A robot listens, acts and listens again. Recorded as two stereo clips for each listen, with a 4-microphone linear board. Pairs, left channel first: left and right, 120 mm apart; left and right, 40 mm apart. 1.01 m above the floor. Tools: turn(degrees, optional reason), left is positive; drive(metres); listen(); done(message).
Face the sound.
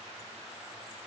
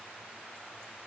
listen()
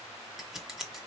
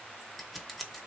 turn(degrees=30)
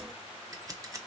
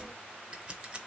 turn(degrees=-30, reason="So it is at 30° right.")
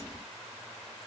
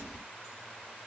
listen()
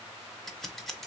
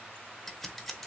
done("Found it: scissors, straight ahead, under 1 m away.")